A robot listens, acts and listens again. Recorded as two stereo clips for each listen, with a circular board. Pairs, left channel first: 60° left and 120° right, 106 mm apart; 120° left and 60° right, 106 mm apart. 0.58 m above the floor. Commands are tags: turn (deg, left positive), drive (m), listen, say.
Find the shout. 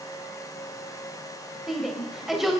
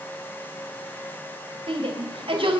<turn deg="-35"/>
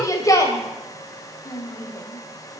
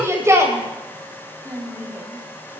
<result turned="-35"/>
<say>Found it: a shout, straight ahead, 2 to 4 m away.</say>